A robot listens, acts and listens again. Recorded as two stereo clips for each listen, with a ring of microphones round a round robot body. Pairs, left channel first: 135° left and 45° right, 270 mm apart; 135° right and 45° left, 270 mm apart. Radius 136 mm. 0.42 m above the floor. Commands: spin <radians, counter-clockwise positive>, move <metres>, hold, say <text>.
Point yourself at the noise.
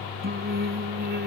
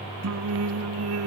spin 0.17
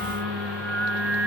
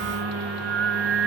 say Found it: singing, straight ahead.